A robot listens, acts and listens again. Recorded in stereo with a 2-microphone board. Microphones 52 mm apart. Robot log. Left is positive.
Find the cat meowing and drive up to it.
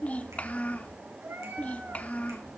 note: The cat meowing: about 50° right or 130° right.
cmd yaw -50
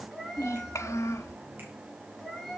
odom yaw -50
cmd fwd 1.0
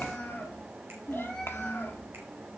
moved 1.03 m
note: The cat meowing is now 10° left.
cmd yaw +10
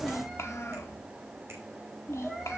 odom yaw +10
cmd fwd 1.0
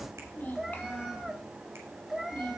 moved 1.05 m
cmd fwd 1.0
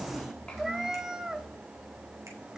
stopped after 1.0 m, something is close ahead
note: The cat meowing is now 10° right.
cmd yaw -10
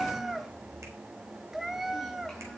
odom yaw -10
end: Arrived at the cat meowing, straight ahead.